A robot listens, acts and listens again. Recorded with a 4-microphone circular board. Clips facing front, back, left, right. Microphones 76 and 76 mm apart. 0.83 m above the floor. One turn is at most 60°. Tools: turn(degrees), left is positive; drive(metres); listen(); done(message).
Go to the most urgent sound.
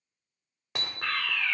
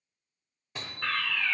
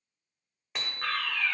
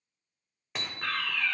turn(degrees=60)
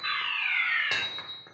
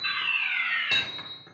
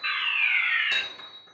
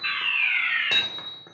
turn(degrees=10)
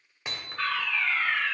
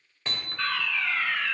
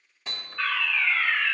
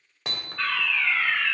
drive(metres=1.0)
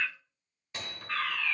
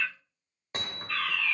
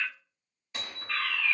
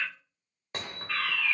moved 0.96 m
turn(degrees=-10)
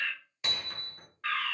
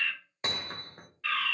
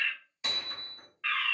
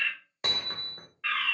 drive(metres=1.0)
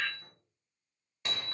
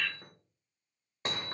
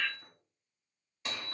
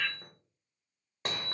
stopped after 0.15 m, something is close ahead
done("I am next to the fire alarm.")